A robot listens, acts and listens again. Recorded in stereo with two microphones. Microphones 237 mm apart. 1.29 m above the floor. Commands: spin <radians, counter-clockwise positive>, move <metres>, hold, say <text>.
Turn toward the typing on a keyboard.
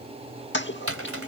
spin -1.13
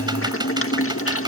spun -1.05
hold
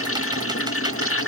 hold
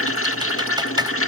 say I heard typing on a keyboard, but can't make it out now. It was about 5° right or 55° right.